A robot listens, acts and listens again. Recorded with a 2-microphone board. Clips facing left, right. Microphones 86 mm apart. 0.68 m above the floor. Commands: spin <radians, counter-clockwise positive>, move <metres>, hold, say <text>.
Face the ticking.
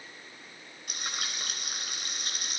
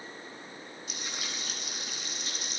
hold
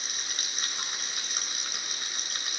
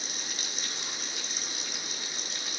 hold
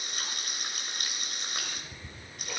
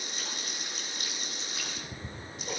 spin -0.61
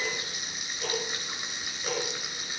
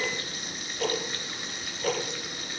spin -1.83
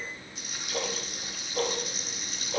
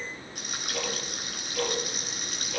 spin 0.52
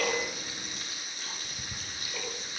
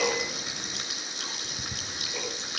say Found it: ticking, straight ahead.